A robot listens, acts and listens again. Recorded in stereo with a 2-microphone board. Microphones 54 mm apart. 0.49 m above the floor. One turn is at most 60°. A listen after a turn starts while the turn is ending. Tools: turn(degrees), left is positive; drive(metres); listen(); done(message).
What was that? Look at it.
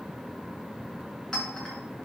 turn(degrees=30)
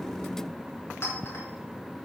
turn(degrees=60)
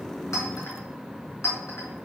turn(degrees=60)
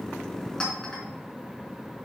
turn(degrees=15)
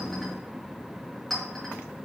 done("Facing the clink.")